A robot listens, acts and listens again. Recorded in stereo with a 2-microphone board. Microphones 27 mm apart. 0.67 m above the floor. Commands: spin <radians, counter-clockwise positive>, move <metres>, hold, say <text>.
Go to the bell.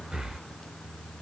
hold
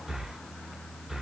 hold
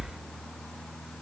say I can't make out a bell, only breathing.